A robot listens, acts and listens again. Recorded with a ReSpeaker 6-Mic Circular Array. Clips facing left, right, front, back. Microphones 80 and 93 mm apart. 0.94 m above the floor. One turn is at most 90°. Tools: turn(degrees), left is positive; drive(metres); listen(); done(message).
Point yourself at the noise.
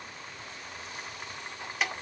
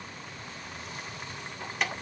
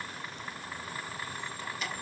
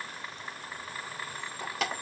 turn(degrees=90)
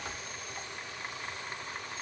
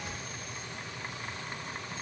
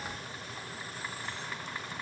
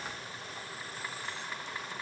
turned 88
turn(degrees=90)
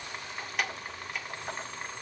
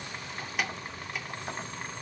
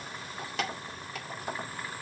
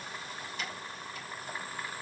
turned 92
done("Found it: keys jangling, straight ahead, 2 to 4 m away.")